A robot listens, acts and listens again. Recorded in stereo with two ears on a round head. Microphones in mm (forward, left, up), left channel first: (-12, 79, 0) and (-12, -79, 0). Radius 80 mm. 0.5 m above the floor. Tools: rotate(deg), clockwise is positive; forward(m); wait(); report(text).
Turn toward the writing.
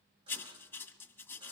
rotate(-30)
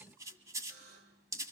rotate(20)
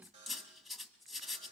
report("Found it: writing, straight ahead, 1 to 2 m away.")